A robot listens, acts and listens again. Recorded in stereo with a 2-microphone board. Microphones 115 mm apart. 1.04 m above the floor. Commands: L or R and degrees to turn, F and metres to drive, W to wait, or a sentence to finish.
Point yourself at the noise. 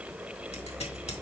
W
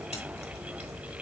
W
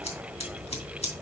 L75
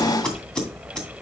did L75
Facing the scissors, 2 to 4 m away.